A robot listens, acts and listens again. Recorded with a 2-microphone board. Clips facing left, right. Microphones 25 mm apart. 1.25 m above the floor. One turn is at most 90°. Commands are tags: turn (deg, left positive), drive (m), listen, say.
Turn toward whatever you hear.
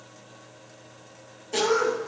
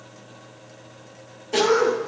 <turn deg="-25"/>
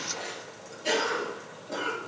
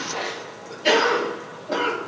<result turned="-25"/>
<turn deg="-90"/>
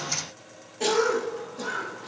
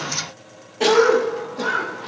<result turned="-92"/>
<turn deg="-35"/>
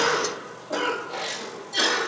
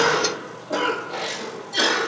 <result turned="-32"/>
<say>Facing the cough.</say>